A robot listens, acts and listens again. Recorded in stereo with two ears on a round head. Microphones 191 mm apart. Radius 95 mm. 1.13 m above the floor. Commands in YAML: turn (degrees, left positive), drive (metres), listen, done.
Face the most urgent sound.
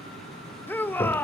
turn: 30
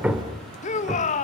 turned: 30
turn: 140
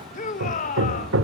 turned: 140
turn: 45
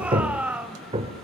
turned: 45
done: "Facing the shout, 1 to 2 m away."